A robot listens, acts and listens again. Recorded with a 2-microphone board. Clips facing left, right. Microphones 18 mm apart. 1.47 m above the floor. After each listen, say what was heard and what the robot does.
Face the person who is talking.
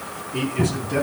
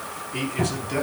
The man speaking: about 30° right or 150° right. Turn 30° right.
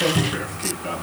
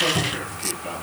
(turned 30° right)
Facing the man speaking, 2 to 4 m away.